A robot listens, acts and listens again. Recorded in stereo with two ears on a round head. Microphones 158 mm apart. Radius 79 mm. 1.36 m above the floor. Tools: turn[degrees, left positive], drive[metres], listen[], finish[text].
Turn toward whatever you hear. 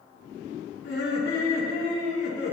Thought: The laughter: about 65° left or 115° left.
Action: turn[65]
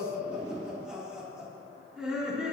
Action: finish[Facing the laughter, 2 to 4 m away.]